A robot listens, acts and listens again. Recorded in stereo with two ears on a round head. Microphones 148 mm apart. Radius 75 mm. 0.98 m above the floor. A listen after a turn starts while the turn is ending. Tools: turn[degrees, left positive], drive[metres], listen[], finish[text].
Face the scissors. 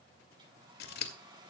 Thought: The scissors: about 60° left or 120° left.
Action: turn[60]
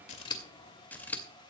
Thought: So it is at 10° left.
Action: turn[10]
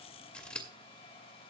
Action: finish[Found it: scissors, straight ahead.]